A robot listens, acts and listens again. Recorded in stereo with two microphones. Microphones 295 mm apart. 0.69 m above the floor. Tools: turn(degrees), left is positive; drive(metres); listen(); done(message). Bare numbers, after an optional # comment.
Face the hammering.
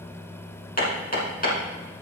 # The hammering: about 30° left or 150° left.
turn(30)
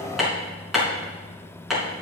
done("Facing the hammering, 2 to 4 m away.")